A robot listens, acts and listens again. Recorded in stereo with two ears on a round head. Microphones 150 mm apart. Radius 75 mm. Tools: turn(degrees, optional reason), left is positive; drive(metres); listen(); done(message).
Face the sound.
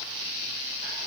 listen()
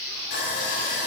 turn(degrees=70, reason="The sawing: about 70° left or 110° left.")
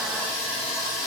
done("Facing the sawing, 2 to 4 m away.")